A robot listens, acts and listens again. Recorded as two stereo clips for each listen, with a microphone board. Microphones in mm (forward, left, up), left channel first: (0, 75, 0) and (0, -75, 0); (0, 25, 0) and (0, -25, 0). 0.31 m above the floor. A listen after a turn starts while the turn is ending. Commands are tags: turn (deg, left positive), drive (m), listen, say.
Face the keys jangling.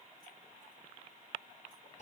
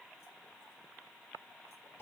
<listen/>
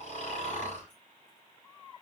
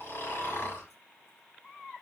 <listen/>
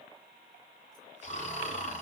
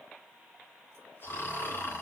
<say>I can't make out keys jangling to turn to.</say>